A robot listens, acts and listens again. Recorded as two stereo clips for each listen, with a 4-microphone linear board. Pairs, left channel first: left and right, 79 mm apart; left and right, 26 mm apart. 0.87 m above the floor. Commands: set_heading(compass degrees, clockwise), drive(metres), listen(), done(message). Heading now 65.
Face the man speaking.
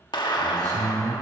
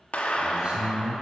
set_heading(110)
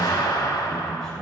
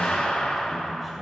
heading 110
set_heading(100)
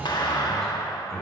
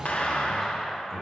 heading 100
done("Facing the man speaking.")